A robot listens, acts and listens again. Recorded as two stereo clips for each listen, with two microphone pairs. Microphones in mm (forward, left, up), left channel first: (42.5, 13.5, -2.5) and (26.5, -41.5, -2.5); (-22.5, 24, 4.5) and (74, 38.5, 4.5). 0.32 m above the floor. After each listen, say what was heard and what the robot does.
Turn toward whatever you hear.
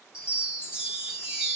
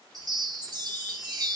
The chime: 35° right. Turn 35° right.
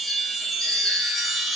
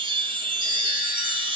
The chime is now 15° right. Turn 15° right.
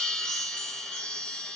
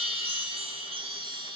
Found it: a chime, straight ahead.